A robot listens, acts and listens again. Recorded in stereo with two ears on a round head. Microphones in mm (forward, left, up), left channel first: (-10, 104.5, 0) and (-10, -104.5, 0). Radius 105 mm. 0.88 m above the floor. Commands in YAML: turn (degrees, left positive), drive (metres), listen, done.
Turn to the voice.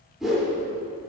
listen: true
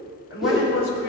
turn: 60
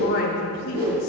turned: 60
turn: 60
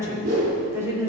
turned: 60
turn: -15
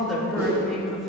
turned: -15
done: "Facing the woman speaking."